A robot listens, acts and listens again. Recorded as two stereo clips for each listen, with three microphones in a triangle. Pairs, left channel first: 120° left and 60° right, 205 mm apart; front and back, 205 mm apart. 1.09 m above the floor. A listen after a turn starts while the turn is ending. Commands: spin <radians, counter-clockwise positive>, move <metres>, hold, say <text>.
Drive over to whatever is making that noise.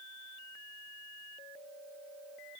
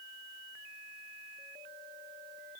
hold
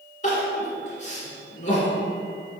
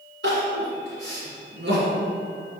spin 2.97
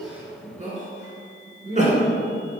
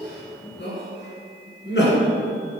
spin -0.17
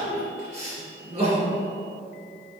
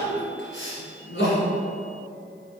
move 1.0
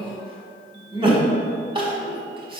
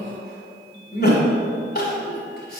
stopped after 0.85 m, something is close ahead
say Arrived at the crying, straight ahead.